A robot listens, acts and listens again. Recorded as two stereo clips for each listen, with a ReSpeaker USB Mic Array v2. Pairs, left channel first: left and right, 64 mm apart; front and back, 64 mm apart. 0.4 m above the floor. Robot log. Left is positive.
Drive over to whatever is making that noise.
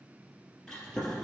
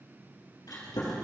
cmd fwd 1.0
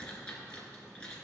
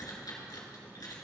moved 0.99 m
note: The chewing is now 15° left.
cmd yaw +15
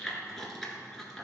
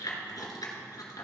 cmd fwd 1.0
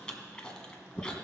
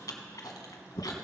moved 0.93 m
note: The chewing is now 15° left.
cmd yaw +15
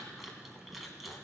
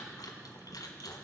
cmd fwd 1.0
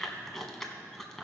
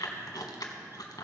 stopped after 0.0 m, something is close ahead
end: I am next to the chewing.